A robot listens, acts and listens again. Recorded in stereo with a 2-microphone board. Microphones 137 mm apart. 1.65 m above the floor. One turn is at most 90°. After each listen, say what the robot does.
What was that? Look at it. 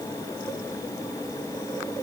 Keep listening.
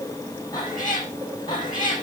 Turn 35° left.
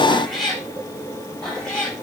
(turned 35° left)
Found it: a cat meowing, straight ahead, over 4 m away.